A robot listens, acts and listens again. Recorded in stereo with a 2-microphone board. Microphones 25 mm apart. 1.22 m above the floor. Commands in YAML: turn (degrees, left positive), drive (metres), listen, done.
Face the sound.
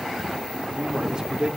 turn: -30
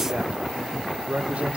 turn: -120
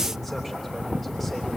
listen: true
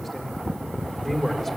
done: "Facing the man speaking, 2 to 4 m away."